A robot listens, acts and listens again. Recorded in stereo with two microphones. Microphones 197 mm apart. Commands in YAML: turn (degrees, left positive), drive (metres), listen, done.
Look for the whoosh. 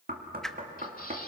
turn: 30
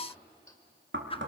turn: 145
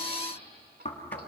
listen: true
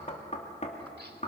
listen: true
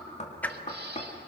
turn: 10
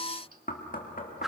done: "Facing the whoosh, under 1 m away."